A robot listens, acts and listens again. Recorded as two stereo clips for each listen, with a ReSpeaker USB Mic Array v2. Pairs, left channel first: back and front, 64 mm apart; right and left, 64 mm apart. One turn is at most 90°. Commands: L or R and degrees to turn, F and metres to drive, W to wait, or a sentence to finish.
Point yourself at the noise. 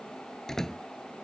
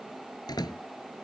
R90
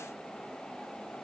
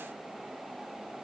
I heard a door slam from this way, but can't make it out now.